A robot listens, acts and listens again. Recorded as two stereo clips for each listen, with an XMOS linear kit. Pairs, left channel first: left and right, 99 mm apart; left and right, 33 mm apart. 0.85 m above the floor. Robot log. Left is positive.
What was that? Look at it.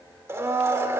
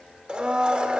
note: The blender: about 25° right or 155° right.
cmd yaw -25
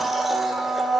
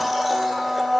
end: Facing the blender, 1 to 2 m away.